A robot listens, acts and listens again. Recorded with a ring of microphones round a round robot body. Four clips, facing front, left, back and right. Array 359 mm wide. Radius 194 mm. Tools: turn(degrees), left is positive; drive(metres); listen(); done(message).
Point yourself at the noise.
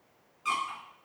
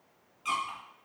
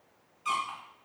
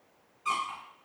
turn(degrees=65)
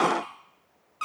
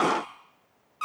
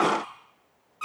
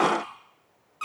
done("Found it: a squeak, straight ahead, 2 to 4 m away.")